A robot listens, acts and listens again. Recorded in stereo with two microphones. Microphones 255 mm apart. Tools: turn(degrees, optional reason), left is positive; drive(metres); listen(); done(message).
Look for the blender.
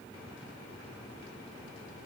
listen()
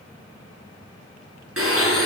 turn(degrees=-60, reason="The blender: about 60° right or 120° right.")
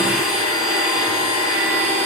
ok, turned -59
turn(degrees=-60, reason="So it is at 60° right.")
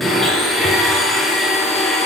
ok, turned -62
done("Found it: a blender, straight ahead.")